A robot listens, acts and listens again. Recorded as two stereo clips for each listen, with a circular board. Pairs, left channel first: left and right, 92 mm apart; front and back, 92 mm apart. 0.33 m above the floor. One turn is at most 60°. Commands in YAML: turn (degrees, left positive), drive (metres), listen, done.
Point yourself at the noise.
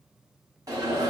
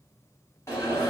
turn: -50
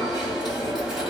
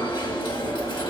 done: "Facing the alarm."